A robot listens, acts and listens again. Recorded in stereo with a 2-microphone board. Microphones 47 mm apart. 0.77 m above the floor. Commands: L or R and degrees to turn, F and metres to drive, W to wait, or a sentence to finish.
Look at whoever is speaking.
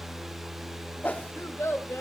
L90
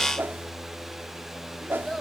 L10
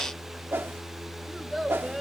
Found it: a child speaking, straight ahead, 2 to 4 m away.